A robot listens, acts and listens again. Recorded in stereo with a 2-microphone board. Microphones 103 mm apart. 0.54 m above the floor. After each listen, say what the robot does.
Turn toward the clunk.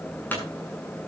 Turn 15° left.
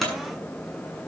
Found it: a clunk, straight ahead.